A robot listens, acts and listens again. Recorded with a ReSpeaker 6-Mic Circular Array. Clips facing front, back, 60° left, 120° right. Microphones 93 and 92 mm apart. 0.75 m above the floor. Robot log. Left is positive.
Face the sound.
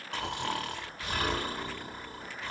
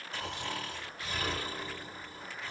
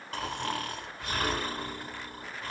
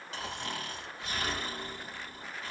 note: The snoring: 20° left.
cmd yaw +20
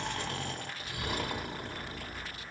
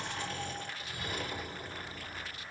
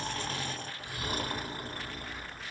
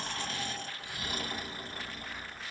note: The snoring is now 10° left.
cmd yaw +10
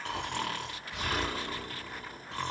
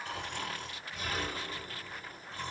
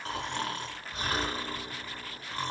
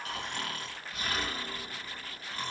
end: Facing the snoring.